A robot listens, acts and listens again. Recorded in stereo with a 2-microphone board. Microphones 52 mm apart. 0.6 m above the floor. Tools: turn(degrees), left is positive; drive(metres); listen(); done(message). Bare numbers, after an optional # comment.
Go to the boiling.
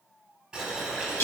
turn(-30)
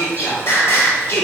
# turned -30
listen()
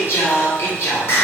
listen()
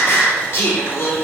done("I heard boiling, but can't make it out now. It was about 15° left or 135° right. I did not reach it.")